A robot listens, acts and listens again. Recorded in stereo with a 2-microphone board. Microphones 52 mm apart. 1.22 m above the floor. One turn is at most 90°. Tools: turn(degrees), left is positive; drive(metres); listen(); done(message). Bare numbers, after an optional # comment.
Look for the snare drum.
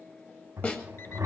# The snare drum: about 30° left or 150° left.
turn(30)
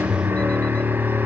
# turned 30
listen()
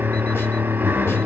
listen()
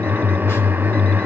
done("I heard a snare drum, but can't make it out now. It was about straight ahead or 120° left.")